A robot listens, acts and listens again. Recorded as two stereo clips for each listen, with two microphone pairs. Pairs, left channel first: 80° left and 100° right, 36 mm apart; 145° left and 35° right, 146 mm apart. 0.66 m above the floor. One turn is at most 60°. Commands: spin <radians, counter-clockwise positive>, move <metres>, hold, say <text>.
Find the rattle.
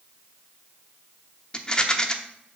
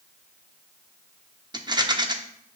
spin 0.35
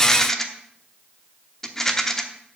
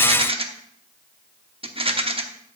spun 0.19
spin 0.17
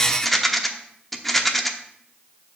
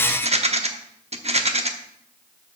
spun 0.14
say Facing the rattle, under 1 m away.